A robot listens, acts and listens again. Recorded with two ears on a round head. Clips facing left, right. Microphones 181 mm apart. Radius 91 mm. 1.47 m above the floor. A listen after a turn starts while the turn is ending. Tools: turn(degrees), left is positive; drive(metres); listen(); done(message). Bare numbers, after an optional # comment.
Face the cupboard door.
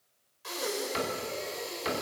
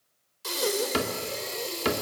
# The cupboard door: about 65° right or 115° right.
turn(-65)
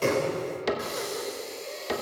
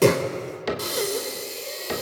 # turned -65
done("Found it: a cupboard door, straight ahead.")